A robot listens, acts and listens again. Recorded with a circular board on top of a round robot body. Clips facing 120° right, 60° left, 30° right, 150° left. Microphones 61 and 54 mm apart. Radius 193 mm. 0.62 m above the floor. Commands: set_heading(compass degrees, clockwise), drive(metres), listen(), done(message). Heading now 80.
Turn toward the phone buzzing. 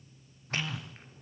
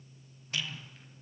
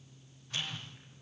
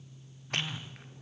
set_heading(215)
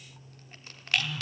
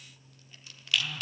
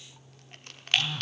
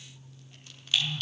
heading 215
set_heading(245)
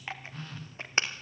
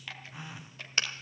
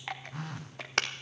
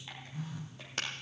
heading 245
set_heading(260)
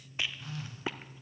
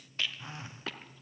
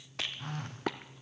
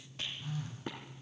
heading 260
done("Found it: a phone buzzing, straight ahead, under 1 m away.")